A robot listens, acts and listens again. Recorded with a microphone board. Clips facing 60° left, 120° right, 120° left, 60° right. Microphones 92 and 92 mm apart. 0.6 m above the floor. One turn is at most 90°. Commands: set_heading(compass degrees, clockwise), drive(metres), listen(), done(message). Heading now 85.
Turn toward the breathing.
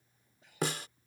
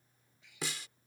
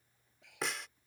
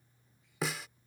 set_heading(355)
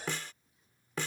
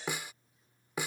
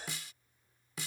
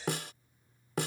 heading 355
set_heading(335)
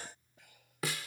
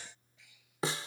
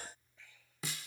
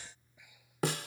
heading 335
set_heading(315)
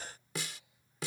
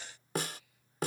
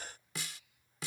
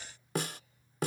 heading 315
listen()
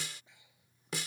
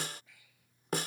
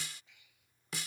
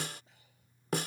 done("Facing the breathing.")